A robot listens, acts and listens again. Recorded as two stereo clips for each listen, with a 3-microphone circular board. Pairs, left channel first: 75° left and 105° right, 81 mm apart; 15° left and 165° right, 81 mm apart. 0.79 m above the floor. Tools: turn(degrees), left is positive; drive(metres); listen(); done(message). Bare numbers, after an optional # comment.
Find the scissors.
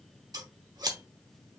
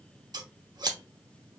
# The scissors: 135° right.
turn(-135)
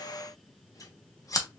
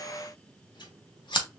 # The scissors is now 30° left.
turn(30)
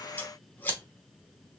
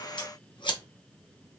done("Facing the scissors.")